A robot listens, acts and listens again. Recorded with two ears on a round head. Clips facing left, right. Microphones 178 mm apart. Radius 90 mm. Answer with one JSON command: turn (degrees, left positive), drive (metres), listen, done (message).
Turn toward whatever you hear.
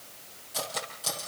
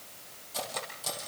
{"turn": 30}
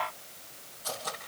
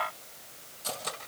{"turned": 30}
{"turn": -25}
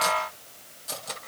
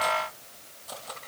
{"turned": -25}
{"turn": 25}
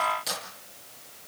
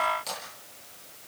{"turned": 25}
{"turn": 10}
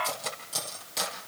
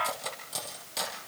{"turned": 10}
{"done": "Found it: cutlery clinking, straight ahead, over 4 m away."}